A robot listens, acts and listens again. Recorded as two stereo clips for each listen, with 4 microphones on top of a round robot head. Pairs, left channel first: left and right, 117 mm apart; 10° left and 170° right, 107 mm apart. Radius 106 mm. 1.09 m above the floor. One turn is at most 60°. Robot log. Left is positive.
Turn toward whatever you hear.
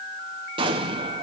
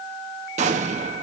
note: The explosion: 145° right.
cmd yaw -60
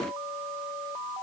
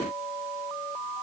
note: Nothing new. It was at 85° right.
cmd yaw -60
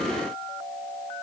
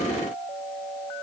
note: Nothing new. It was at 25° right.
cmd yaw -25
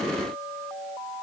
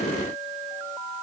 end: I heard an explosion from this way, but can't make it out now.